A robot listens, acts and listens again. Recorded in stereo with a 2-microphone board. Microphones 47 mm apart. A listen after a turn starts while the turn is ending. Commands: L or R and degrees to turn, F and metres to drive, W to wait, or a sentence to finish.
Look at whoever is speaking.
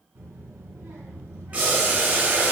R70
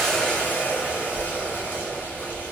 Facing the child speaking, 2 to 4 m away.